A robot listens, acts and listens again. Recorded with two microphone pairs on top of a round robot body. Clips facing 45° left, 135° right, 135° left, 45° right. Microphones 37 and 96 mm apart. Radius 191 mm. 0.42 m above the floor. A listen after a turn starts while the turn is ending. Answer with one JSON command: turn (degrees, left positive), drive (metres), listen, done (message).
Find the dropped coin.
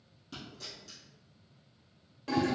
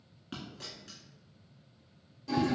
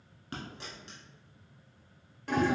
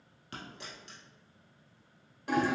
{"turn": -170}
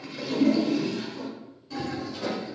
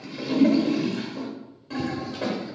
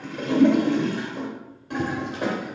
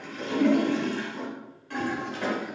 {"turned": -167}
{"done": "I heard a dropped coin from this way, but can't make it out now."}